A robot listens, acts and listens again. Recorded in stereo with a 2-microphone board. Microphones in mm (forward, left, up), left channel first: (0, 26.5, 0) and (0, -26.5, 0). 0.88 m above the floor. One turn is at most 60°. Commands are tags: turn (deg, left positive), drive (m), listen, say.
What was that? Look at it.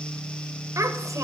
<turn deg="-60"/>
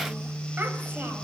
<turn deg="-30"/>
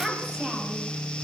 <turn deg="-10"/>
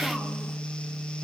<listen/>
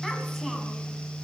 <listen/>
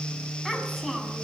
<say>Found it: a child speaking, straight ahead, over 4 m away.</say>